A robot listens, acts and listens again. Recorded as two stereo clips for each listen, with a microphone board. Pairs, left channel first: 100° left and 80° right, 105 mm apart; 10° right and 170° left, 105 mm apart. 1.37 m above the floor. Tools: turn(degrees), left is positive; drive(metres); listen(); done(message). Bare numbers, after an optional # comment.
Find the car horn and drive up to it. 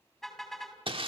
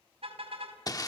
# The car horn: 170° right.
turn(-170)
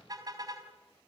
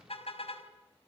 # The car horn is now 30° right.
turn(-30)
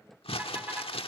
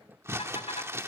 drive(1.0)
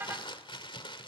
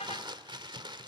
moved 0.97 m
# The car horn is now 10° right.
turn(-10)
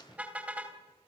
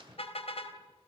drive(1.0)
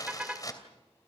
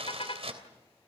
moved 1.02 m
drive(1.0)
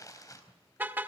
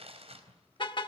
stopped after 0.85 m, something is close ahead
# The car horn is now 10° right.
turn(-10)
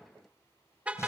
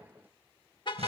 done("Arrived at the car horn, straight ahead.")